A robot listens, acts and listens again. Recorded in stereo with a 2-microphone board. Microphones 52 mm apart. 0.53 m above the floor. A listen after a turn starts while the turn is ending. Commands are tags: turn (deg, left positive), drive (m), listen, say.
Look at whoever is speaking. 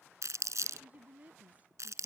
<turn deg="-30"/>
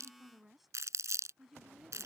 <say>Found it: a woman speaking, straight ahead.</say>